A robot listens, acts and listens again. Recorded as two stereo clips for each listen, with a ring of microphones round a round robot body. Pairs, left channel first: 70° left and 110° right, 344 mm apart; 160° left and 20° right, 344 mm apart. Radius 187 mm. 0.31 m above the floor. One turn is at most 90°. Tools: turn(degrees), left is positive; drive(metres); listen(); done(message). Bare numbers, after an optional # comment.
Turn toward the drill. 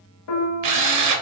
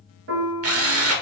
# The drill: 75° right.
turn(-75)
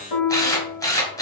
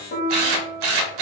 # The drill is now 15° right.
turn(-15)
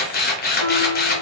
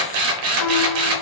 done("Found it: a drill, straight ahead.")